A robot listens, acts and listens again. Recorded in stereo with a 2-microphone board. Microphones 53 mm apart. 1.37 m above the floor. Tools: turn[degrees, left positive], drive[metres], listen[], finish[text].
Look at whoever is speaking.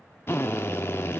Action: listen[]
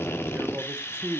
Thought: The man speaking: about 40° right or 140° right.
Action: turn[-40]
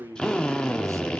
Thought: So it is at 100° right.
Action: turn[-100]
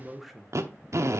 Action: finish[Found it: a man speaking, straight ahead, under 1 m away.]